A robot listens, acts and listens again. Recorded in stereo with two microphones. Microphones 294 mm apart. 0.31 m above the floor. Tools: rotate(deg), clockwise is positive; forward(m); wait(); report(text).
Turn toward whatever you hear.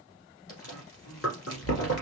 rotate(-60)
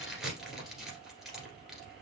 report("Found it: chewing, straight ahead, 1 to 2 m away.")